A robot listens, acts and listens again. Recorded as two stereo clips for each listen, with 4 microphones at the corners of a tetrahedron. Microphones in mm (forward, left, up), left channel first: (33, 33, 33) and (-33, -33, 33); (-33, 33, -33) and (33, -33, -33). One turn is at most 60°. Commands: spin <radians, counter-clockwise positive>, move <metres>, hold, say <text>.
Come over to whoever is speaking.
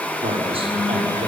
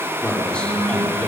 spin -1.05
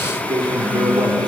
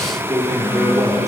spin -1.05
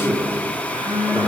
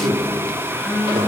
spin -0.52
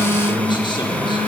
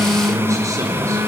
spin 0.17
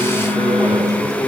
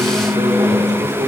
move 1.0
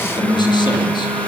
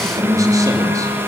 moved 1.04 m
hold
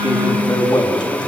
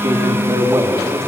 move 1.0
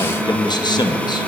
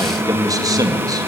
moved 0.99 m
move 1.0
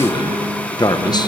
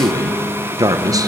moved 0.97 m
move 1.0
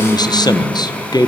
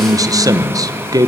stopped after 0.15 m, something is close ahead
say I am next to the man speaking.